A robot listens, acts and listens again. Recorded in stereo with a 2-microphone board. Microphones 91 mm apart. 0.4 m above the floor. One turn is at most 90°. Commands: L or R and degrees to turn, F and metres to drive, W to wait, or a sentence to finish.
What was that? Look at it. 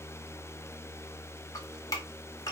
L40
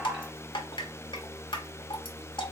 L90
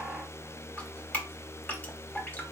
L20
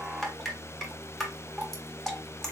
Facing the dripping.